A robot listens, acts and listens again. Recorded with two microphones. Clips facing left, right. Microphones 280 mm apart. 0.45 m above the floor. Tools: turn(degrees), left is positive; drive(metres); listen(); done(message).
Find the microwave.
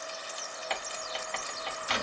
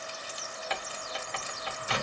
turn(degrees=-60)
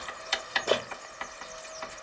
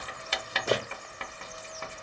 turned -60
turn(degrees=-30)
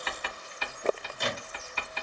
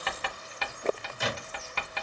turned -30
done("Found it: a microwave, straight ahead, under 1 m away.")